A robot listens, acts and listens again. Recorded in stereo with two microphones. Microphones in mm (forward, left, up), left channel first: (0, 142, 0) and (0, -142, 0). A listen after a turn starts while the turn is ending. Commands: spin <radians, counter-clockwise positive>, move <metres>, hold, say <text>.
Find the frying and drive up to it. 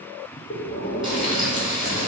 spin -0.26
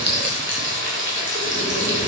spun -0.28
spin -2.62
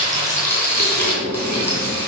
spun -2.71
spin 0.17
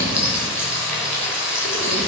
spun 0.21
move 1.0
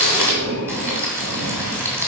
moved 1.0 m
spin -0.17
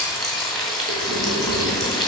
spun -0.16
move 1.0
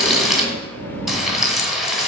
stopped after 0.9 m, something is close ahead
say I am next to the frying.